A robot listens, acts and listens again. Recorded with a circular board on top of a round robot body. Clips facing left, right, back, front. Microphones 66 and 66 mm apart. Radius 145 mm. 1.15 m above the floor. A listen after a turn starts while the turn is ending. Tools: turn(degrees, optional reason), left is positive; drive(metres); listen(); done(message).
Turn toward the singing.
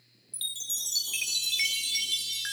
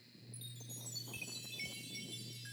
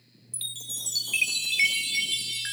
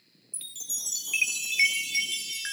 listen()
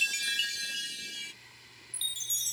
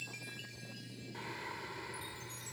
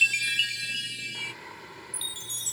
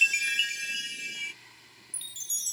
turn(degrees=-140, reason="The singing: 140° right.")
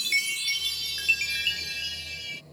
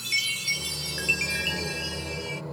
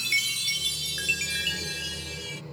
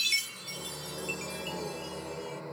turn(degrees=-60, reason="The singing is now 60° right.")
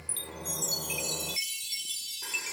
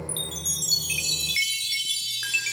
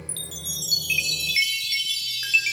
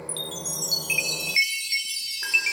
listen()
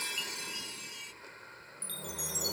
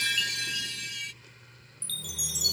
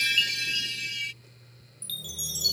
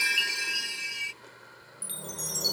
listen()
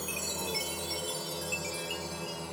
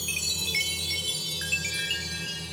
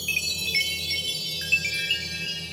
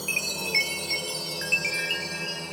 turn(degrees=30, reason="The singing is now 30° left.")
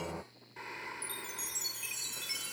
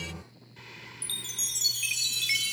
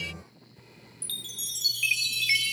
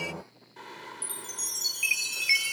turn(degrees=25, reason="The singing is now 25° left.")
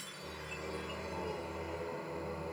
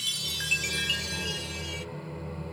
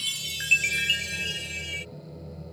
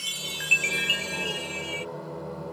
done("Found it: singing, straight ahead.")